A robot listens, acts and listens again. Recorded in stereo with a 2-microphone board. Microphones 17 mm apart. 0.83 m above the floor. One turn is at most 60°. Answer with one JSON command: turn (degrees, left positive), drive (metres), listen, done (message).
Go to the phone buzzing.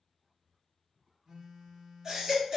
{"turn": -40}
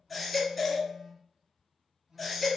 {"turn": -60}
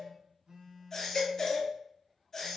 {"turn": -60}
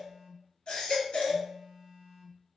{"drive": 1.0}
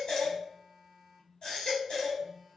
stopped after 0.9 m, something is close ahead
{"done": "I am next to the phone buzzing."}